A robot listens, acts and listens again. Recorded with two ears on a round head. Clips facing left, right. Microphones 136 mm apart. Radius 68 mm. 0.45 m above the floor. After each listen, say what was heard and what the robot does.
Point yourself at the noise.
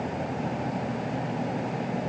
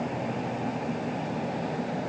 Keep listening.
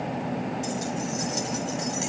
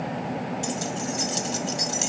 The keys jangling: about 50° right or 130° right. Turn 50° right.
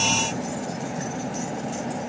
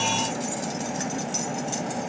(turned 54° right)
Keep listening.
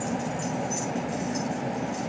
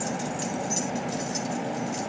So it is at 45° right. Turn 45° right.
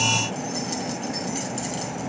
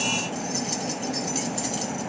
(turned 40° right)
Facing the keys jangling, 2 to 4 m away.